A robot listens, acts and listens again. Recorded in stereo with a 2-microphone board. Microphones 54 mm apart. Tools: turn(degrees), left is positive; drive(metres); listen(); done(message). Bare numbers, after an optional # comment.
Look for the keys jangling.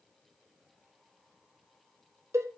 listen()
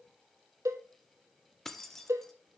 turn(30)
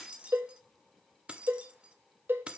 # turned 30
# So it is at 20° right.
turn(-20)
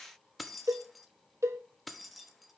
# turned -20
done("Facing the keys jangling.")